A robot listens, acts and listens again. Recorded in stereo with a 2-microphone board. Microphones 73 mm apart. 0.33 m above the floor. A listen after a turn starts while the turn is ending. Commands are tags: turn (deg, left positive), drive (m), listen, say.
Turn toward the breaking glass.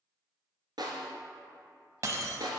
<turn deg="-45"/>
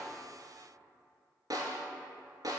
<listen/>
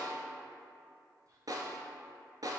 <say>I heard breaking glass, but can't make it out now. It was about straight ahead or 90° right.</say>